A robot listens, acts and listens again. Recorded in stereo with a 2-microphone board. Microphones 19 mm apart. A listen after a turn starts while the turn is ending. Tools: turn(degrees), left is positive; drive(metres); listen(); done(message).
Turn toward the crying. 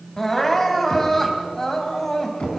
turn(degrees=20)
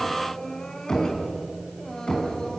turn(degrees=140)
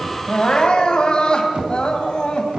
turn(degrees=45)
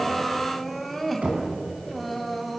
done("Facing the crying, 2 to 4 m away.")